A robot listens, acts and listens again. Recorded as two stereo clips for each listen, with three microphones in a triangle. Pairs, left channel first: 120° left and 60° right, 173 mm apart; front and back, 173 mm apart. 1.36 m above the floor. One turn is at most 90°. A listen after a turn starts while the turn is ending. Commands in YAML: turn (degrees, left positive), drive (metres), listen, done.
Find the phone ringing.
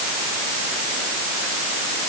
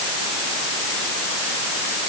listen: true
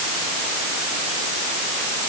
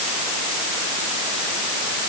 listen: true
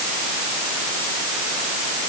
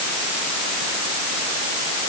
done: "I can't make out a phone ringing to turn to."